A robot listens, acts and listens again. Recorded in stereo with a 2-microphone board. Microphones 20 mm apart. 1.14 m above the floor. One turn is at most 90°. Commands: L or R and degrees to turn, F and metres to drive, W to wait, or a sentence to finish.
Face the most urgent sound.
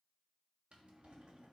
W
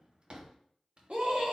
R70
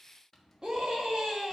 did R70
R40
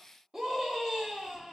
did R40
R20
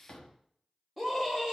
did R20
Facing the scream, 2 to 4 m away.